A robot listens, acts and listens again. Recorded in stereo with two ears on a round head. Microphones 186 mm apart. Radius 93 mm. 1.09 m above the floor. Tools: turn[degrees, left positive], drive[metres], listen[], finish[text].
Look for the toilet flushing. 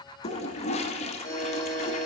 Thought: The toilet flushing: about 30° left or 150° left.
Action: turn[30]
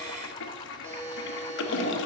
Thought: So it is at 115° left.
Action: turn[115]
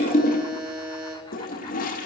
Thought: The toilet flushing is now 45° left.
Action: turn[45]
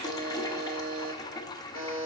Thought: The toilet flushing is now 20° left.
Action: turn[20]
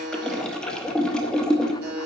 Action: finish[Facing the toilet flushing, under 1 m away.]